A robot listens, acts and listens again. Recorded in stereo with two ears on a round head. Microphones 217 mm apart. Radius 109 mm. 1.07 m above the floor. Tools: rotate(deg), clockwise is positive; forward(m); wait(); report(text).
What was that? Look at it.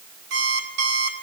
rotate(45)
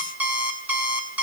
report("Found it: an alarm clock, straight ahead.")